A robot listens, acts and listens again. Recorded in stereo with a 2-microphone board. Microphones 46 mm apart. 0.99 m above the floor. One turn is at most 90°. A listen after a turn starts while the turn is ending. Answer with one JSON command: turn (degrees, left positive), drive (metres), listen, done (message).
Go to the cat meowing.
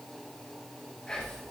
{"listen": true}
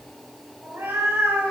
{"turn": -75}
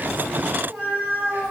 {"turn": -30}
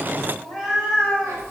{"turn": -10}
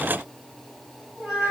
{"drive": 1.0}
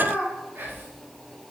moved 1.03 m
{"drive": 1.0}
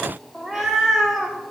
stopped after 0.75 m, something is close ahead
{"done": "Arrived at the cat meowing, straight ahead."}